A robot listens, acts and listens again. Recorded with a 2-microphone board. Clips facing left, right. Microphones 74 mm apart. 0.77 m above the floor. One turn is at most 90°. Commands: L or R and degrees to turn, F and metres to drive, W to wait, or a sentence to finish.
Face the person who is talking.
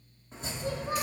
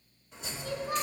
L30
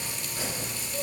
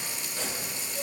W
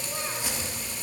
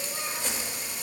W
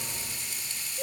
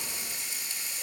L90
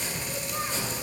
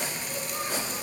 L30
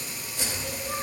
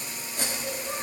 R10
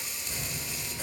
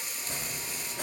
W
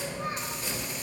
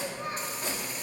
Found it: a child speaking, straight ahead.